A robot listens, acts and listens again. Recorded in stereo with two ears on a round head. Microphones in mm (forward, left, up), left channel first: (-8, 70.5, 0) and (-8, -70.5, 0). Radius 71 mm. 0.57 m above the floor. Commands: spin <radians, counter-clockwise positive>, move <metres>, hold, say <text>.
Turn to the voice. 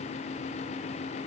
hold
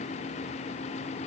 hold
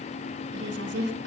spin -1.57
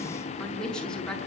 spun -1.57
say Facing the woman speaking.